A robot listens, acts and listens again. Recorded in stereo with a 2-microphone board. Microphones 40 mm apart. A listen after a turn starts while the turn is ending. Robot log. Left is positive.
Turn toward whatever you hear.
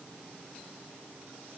cmd idle
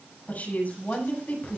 note: The woman speaking: about 45° left or 135° left.
cmd yaw +45
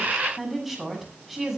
end: Facing the woman speaking, over 4 m away.